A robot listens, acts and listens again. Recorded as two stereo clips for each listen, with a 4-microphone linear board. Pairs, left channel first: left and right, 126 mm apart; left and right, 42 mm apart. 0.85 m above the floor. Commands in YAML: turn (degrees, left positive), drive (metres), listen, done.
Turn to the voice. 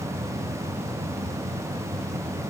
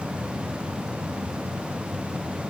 listen: true
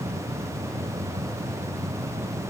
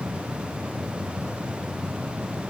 listen: true
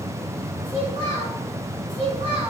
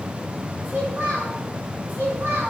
turn: -50
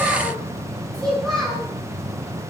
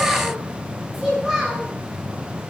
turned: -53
done: "Facing the child speaking."